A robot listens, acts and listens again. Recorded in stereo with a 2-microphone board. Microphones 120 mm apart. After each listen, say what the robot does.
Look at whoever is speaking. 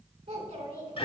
Turn 90° right.
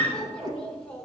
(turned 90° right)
Turn 10° left.
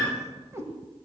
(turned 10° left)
Keep listening.
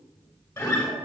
Keep listening.
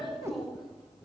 Found it: a child speaking, straight ahead, 2 to 4 m away.